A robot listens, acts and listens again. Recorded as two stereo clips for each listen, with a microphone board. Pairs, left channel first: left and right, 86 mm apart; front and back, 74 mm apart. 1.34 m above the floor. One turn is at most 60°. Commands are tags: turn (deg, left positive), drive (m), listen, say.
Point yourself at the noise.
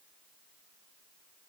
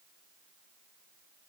<listen/>
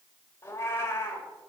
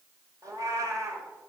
<turn deg="60"/>
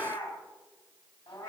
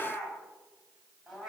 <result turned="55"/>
<turn deg="60"/>
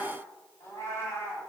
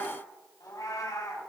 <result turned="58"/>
<turn deg="30"/>
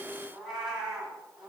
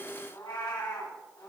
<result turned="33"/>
<say>Found it: a cat meowing, straight ahead.</say>